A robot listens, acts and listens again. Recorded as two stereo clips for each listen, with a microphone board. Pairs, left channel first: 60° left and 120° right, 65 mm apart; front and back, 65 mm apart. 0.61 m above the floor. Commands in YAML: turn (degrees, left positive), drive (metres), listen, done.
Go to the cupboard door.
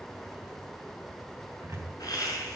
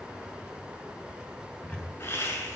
turn: -75
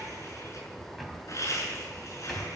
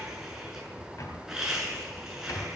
turn: -30
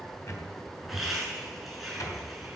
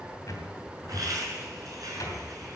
turn: 25
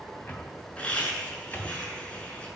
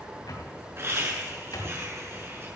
drive: 1.0
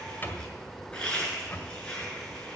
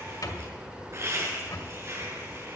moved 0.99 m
drive: 1.0
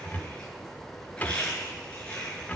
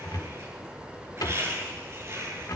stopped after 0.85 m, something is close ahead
done: "I am next to the cupboard door."